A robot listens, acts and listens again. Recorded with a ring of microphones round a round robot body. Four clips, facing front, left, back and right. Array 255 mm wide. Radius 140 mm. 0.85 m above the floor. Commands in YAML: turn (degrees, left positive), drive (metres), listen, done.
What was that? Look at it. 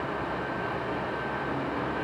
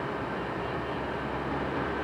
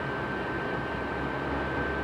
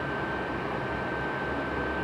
listen: true
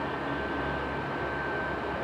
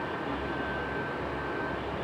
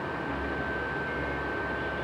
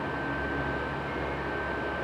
listen: true
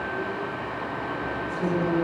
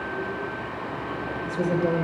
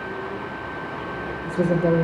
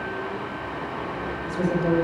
turn: 170
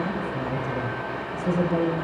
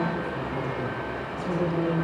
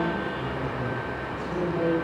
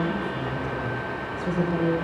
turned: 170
turn: -15
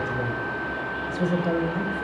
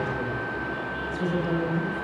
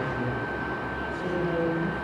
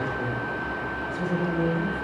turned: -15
done: "Found it: a woman speaking, straight ahead."